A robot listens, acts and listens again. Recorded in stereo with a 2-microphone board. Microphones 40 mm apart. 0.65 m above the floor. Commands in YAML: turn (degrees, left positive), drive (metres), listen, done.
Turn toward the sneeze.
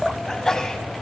turn: 30
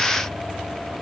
listen: true
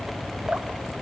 done: "I heard a sneeze, but can't make it out now. It was about 15° right or 135° left."